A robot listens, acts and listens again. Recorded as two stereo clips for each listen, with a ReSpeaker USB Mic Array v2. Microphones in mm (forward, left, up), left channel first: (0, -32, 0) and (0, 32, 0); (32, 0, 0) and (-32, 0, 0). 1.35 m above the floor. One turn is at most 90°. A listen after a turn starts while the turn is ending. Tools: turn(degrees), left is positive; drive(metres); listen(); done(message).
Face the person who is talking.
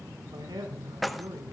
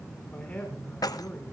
turn(degrees=75)
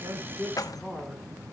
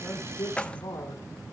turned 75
done("Facing the man speaking, over 4 m away.")